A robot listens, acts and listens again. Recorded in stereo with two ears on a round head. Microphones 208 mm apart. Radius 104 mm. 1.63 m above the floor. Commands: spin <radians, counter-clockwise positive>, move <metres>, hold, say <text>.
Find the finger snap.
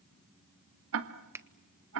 spin -0.52
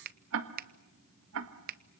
spin -2.44
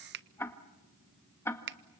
spin -0.96
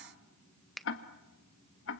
say Found it: a finger snap, straight ahead.